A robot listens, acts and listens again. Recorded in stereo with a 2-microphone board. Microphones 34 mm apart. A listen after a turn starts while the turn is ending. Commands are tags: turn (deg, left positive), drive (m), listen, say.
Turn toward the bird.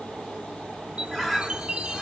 <turn deg="30"/>
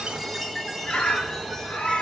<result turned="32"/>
<turn deg="145"/>
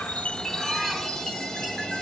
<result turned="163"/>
<turn deg="-20"/>
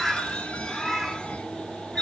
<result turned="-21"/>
<say>Facing the bird, 1 to 2 m away.</say>